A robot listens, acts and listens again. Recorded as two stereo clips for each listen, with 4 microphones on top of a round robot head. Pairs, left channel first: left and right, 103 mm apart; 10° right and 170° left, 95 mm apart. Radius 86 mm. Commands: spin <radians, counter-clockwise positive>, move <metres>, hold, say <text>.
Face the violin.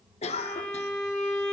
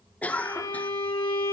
spin 0.44
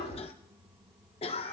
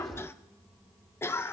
hold
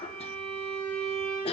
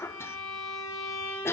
spin 0.26
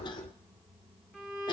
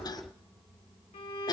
say Found it: a violin, straight ahead, 2 to 4 m away.